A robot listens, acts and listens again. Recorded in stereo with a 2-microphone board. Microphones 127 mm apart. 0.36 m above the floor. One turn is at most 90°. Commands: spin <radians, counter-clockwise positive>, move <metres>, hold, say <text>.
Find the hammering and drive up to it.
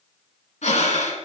hold
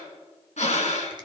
hold
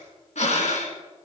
say I can't make out hammering to turn to.